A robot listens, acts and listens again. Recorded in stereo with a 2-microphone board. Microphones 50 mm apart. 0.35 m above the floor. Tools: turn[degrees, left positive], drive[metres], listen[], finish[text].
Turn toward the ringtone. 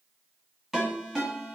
Action: turn[-30]
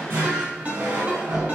Thought: So it is at 145° right.
Action: turn[-145]
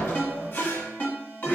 Thought: The ringtone is now 45° left.
Action: turn[45]
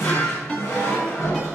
Thought: The ringtone is now 20° left.
Action: turn[20]
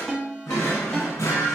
Action: finish[Facing the ringtone, 1 to 2 m away.]